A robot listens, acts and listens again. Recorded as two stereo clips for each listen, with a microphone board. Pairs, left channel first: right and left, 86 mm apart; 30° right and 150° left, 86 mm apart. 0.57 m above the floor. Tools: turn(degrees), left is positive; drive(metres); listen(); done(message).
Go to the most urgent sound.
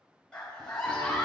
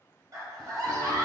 turn(degrees=-170)
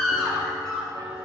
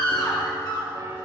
turn(degrees=-10)
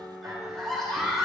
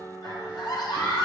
drive(metres=1.0)
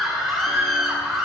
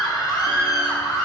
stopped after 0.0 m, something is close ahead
done("Something is in my way. I am facing the scream but have not reached it.")